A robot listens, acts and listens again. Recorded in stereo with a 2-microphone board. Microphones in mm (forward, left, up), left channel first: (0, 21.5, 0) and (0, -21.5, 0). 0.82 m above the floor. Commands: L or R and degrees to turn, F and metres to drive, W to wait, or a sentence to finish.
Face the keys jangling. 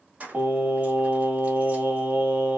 R35
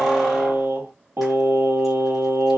W
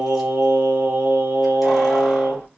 W
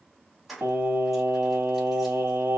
Facing the keys jangling, under 1 m away.